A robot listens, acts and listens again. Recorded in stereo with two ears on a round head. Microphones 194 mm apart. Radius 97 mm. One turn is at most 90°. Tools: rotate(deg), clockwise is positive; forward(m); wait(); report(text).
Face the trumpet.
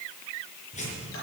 wait()
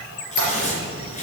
wait()
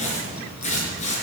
report("I can't make out a trumpet to turn to.")